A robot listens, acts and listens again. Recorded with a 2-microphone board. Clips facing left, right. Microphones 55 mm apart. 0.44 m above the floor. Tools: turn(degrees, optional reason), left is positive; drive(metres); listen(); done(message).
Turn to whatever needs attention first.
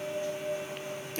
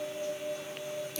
listen()
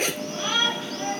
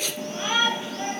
turn(degrees=-15, reason="The shout: about 15° right or 165° right.")
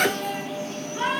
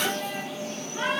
done("Facing the shout, over 4 m away.")